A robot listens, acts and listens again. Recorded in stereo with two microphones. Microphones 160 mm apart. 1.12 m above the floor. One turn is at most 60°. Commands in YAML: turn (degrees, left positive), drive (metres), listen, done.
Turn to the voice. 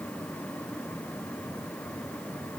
listen: true
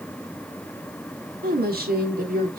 turn: -60
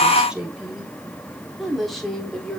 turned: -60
done: "Found it: a woman speaking, straight ahead."